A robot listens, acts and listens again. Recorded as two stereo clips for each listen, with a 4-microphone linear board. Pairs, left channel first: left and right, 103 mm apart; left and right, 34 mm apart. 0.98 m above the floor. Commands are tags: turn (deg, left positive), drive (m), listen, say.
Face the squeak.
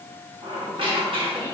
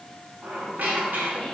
<turn deg="-60"/>
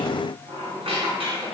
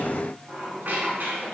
<turn deg="-60"/>
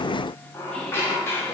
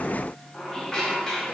<turn deg="25"/>
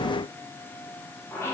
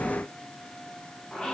<turn deg="10"/>
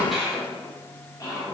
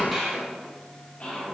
<say>Found it: a squeak, straight ahead, under 1 m away.</say>